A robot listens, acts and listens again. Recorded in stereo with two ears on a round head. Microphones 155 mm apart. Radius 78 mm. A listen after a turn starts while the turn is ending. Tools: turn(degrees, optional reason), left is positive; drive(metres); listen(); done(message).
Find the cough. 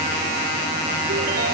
listen()
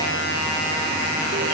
listen()
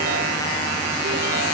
done("I can't make out a cough to turn to.")